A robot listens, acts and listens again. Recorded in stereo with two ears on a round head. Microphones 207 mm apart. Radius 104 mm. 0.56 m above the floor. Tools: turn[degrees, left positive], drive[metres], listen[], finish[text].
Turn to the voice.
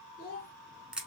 Thought: The child speaking: about 40° left or 140° left.
Action: turn[40]
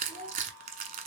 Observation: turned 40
Thought: So it is at 10° left.
Action: turn[10]
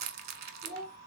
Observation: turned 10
Action: finish[Found it: a child speaking, straight ahead, 1 to 2 m away.]